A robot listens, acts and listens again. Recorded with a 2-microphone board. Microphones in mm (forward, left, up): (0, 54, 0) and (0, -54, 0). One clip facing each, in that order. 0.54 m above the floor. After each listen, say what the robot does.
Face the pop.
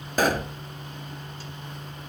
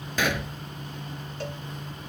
Turn 40° left.
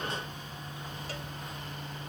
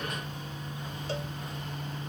Keep listening.
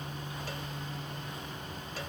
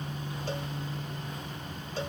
I heard a pop, but can't make it out now. It was about straight ahead or 100° left.